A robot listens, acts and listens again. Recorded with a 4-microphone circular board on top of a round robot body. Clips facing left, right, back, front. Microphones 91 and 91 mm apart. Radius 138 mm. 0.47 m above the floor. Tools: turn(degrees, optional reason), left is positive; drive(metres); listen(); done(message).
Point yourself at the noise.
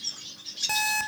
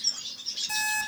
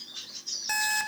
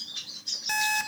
turn(degrees=100, reason="The alarm clock: 100° left.")
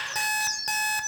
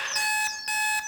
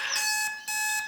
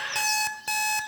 turn(degrees=30, reason="The alarm clock is now 30° left.")
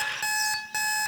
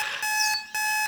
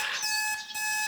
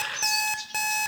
done("Facing the alarm clock.")